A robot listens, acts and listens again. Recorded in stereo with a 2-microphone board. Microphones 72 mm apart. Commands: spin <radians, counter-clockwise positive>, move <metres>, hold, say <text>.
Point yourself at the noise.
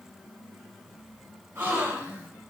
spin -0.61
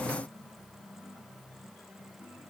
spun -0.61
hold
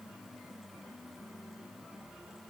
say I heard a gasp, but can't make it out now. It was about straight ahead or 110° right.